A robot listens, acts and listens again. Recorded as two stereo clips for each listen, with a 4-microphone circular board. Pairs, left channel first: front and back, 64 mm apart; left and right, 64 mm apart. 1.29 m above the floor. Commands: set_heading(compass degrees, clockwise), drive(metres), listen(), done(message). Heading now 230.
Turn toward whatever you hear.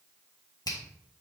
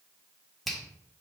done("Found it: a finger snap, straight ahead, 1 to 2 m away.")